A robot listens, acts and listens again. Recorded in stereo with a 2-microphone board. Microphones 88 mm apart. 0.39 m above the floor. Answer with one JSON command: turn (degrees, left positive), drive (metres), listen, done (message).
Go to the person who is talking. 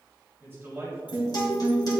{"turn": -25}
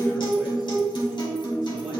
{"listen": true}
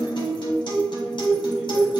{"listen": true}
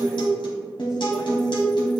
{"done": "I heard a man speaking, but can't make it out now. It was about straight ahead or 130° right. I did not reach it."}